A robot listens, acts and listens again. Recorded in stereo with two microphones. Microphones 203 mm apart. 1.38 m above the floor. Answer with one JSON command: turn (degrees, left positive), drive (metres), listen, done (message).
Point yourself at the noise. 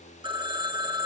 {"turn": -25}
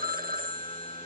{"turn": -130}
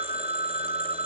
{"turn": -30}
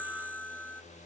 {"done": "Facing the phone ringing."}